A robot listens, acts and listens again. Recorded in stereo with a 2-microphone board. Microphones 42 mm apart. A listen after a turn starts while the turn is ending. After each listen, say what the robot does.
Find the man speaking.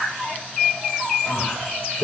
Turn 60° left.
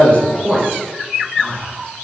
Turn 15° left.
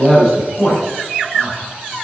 Turn 15° left.
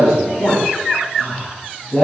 Turn 20° left.
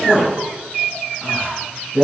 Found it: a man speaking, straight ahead, over 4 m away.